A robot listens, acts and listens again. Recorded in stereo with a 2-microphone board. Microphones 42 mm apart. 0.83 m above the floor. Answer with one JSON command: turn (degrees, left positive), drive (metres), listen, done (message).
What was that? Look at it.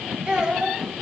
{"turn": -20}
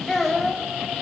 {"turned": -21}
{"done": "Facing the child speaking."}